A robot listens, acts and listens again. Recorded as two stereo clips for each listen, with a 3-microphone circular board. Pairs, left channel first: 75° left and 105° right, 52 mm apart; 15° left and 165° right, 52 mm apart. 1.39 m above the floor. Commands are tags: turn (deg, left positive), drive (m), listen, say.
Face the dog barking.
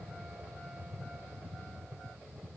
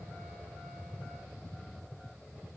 <listen/>
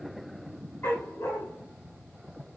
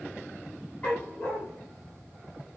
<turn deg="70"/>
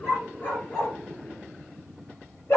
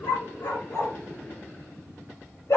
<turn deg="30"/>
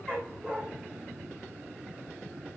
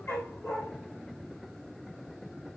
<say>Facing the dog barking.</say>